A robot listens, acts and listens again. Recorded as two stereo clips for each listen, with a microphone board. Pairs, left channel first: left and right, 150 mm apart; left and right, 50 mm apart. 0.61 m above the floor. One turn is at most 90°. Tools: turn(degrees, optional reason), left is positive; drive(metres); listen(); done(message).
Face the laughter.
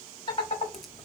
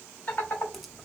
turn(degrees=35, reason="The laughter: about 35° left or 145° left.")
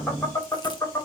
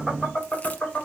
turn(degrees=20, reason="So it is at 20° left.")
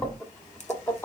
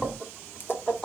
turn(degrees=15, reason="The laughter is now 15° left.")
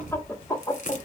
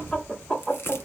turn(degrees=25, reason="The laughter is now 25° left.")
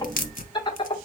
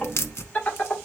turn(degrees=35, reason="The laughter is now 35° left.")
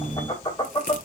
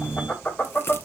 turn(degrees=25, reason="The laughter is now 25° left.")
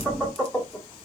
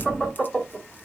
done("Found it: laughter, straight ahead, 1 to 2 m away.")